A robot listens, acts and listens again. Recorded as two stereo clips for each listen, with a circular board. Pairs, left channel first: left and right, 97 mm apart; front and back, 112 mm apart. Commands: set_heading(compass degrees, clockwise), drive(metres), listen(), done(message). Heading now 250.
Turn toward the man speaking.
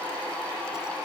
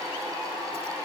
listen()
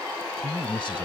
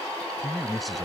set_heading(160)
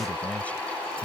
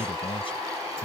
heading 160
set_heading(140)
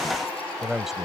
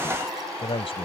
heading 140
done("Facing the man speaking.")